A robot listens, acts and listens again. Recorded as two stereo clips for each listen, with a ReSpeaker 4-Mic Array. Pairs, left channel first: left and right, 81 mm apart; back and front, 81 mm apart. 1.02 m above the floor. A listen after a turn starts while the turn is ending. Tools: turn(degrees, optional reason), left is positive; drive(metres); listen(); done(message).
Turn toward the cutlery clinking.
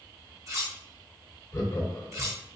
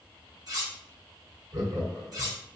turn(degrees=-40, reason="The cutlery clinking: 40° right.")
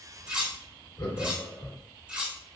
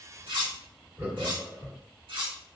turn(degrees=-15, reason="The cutlery clinking is now 15° right.")
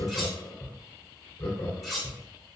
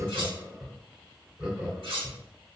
done("Found it: cutlery clinking, straight ahead, 1 to 2 m away.")